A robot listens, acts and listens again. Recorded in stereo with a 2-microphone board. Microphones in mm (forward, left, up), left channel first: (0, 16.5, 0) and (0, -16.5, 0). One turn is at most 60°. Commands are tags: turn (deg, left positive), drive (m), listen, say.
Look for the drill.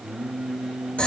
<listen/>
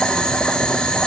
<listen/>
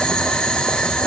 <say>I can't make out a drill, only boiling and singing.</say>